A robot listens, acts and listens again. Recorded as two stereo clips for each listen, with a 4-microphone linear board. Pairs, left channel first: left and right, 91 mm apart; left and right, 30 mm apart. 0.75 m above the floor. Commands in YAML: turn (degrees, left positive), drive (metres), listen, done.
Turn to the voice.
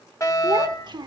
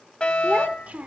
turn: -55
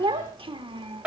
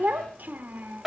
turn: -75
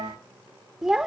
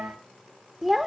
done: "Found it: a child speaking, straight ahead."